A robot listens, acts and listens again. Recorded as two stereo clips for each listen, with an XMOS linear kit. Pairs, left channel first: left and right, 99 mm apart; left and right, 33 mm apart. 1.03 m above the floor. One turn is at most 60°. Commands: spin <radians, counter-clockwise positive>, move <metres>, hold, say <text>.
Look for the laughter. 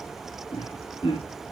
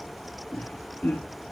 spin 1.05
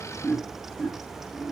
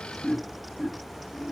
spin 0.35
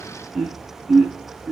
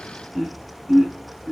say Facing the laughter.